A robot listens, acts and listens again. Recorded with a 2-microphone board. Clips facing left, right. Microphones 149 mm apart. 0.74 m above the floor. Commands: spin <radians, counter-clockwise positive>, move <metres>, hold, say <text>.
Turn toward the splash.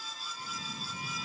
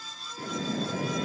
spin -1.57
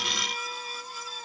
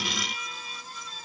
say I heard a splash from this way, but can't make it out now.